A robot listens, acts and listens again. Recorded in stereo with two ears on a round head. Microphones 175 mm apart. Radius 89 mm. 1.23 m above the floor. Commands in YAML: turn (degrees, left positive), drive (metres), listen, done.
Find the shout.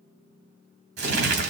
listen: true
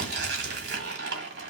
listen: true
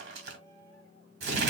done: "I can't make out a shout to turn to."